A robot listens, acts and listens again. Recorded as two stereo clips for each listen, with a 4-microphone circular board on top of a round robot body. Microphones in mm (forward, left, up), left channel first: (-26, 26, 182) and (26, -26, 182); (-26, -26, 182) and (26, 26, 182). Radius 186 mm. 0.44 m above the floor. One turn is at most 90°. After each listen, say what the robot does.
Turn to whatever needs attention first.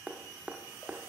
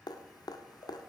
Keep listening.
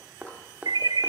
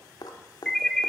Turn 55° right.
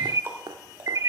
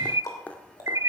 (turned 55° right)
Found it: an alarm, straight ahead, under 1 m away.